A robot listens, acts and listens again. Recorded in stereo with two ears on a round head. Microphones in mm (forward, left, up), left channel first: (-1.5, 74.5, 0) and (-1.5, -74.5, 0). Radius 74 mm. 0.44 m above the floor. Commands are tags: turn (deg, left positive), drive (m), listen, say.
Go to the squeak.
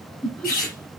<turn deg="55"/>
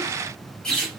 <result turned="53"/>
<drive m="1.0"/>
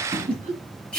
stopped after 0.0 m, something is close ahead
<say>Something is in my way. I am facing the squeak but have not reached it.</say>